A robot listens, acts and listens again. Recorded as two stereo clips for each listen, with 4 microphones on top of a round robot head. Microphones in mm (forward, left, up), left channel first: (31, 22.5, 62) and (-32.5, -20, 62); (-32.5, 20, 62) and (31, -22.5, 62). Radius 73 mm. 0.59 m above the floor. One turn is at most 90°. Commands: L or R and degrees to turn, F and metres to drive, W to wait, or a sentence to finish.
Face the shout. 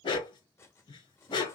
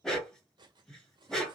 W
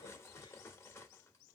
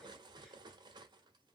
W
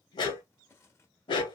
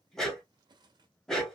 I can't make out a shout, only cutlery clinking and a dog barking.